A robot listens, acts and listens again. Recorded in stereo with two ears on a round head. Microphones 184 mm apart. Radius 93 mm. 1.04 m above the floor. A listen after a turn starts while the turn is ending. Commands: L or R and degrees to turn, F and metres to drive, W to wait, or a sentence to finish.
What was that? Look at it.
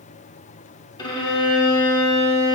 L20
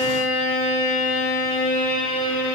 L140
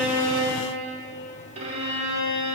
R35
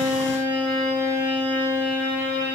L10
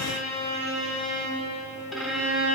Facing the violin.